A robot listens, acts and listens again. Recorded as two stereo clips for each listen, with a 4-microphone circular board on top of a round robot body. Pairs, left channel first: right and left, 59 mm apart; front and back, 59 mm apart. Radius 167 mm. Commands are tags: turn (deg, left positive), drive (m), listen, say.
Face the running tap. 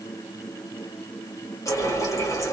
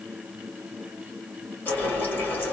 <turn deg="-60"/>
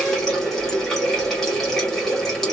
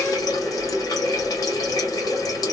<say>Facing the running tap, 1 to 2 m away.</say>